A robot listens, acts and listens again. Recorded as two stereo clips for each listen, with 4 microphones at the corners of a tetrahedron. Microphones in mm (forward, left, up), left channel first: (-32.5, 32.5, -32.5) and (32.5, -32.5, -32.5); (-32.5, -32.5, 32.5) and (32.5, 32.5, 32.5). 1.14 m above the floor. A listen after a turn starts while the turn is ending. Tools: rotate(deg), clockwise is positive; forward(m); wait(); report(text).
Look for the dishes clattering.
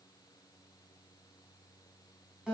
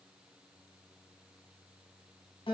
wait()
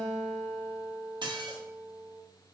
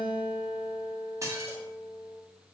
rotate(10)
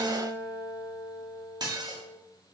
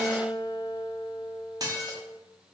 report("Facing the dishes clattering.")